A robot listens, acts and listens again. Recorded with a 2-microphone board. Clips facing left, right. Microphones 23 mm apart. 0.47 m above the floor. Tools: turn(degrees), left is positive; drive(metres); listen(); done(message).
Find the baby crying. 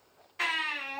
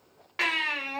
turn(degrees=-65)
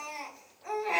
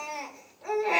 turn(degrees=-35)
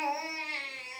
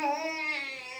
done("Facing the baby crying.")